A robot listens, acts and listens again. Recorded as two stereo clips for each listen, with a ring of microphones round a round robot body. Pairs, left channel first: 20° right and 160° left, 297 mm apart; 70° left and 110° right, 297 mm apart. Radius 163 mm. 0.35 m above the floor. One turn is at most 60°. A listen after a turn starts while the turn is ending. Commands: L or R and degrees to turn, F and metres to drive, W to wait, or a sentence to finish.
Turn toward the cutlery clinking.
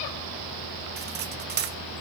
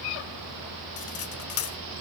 L60
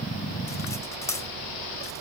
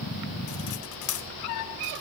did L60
L60
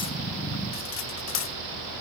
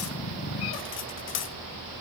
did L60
L20
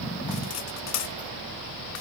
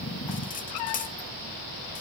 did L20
Found it: cutlery clinking, straight ahead, under 1 m away.